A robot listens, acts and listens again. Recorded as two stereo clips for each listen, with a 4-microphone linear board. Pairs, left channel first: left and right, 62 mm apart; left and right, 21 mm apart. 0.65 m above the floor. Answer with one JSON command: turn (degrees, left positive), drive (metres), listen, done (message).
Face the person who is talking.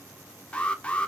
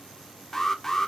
{"listen": true}
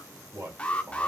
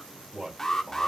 {"turn": -35}
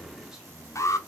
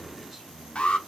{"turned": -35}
{"done": "Facing the man speaking, 2 to 4 m away."}